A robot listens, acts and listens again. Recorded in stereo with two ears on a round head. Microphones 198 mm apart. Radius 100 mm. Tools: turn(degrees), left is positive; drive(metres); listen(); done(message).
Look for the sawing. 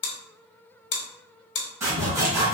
turn(degrees=-30)
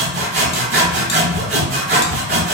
turn(degrees=-135)
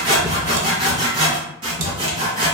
turn(degrees=-20)
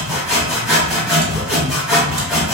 done("Found it: sawing, straight ahead.")